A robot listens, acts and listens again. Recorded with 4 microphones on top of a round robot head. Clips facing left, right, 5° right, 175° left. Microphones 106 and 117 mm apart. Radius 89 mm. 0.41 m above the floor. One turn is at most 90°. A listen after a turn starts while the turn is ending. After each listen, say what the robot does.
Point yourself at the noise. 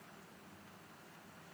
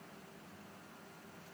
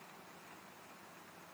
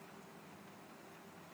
Keep listening.
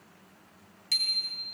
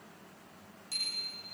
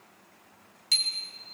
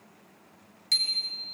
Turn 75° left.
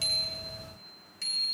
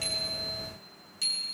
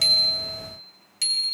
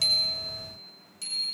Turn 10° right.
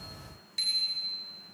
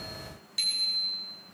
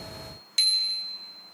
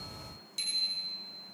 Found it: a bicycle bell, straight ahead, 2 to 4 m away.